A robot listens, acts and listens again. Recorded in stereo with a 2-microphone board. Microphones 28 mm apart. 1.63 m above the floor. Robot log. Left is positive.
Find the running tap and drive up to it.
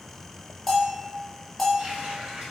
note: The running tap: about 60° right or 120° right.
cmd yaw -60
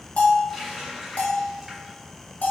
cmd fwd 1.0
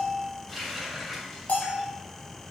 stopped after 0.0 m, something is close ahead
end: Something is in my way. I am facing the running tap but have not reached it.